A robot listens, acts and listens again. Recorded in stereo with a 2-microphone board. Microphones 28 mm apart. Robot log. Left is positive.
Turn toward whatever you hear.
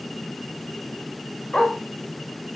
note: The dog barking: about 35° left or 145° left.
cmd yaw +35
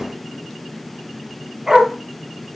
note: So it is at 20° right.
cmd yaw -20
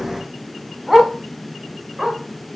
note: The dog barking is now 15° right.
cmd yaw -15
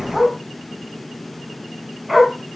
end: Facing the dog barking.